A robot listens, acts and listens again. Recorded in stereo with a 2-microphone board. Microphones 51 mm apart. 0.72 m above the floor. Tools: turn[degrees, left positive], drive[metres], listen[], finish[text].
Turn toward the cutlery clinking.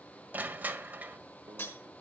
Thought: The cutlery clinking: about 50° left or 130° left.
Action: turn[50]
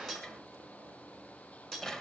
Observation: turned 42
Action: finish[Facing the cutlery clinking, over 4 m away.]